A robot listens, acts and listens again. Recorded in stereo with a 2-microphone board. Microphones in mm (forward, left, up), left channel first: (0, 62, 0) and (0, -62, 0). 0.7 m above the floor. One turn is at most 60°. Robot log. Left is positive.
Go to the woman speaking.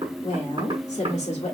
note: The woman speaking: about 65° left or 115° left.
cmd yaw +60
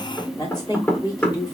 note: So it is at 35° left.
cmd yaw +35
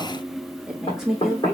cmd fwd 1.0
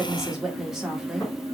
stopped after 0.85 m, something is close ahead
end: Arrived at the woman speaking, straight ahead.